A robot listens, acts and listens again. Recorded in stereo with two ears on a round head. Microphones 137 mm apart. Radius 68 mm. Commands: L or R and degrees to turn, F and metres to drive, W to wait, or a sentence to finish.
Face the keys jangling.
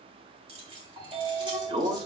R35
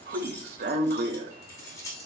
L25
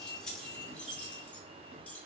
L10
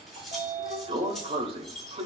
Facing the keys jangling.